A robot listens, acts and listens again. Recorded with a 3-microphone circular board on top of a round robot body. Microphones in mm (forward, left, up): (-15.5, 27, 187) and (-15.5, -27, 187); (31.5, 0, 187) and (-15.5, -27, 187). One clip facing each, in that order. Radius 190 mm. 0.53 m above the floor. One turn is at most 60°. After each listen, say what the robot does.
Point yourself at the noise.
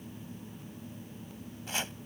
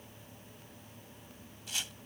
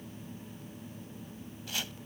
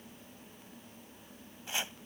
Turn 60° left.
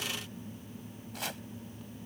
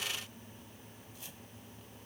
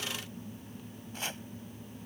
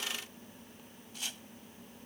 Turn 60° left.
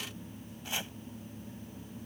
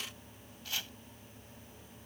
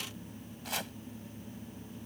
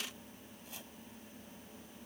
Turn 25° left.
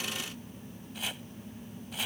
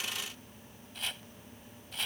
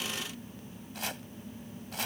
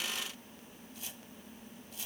Facing the chopping.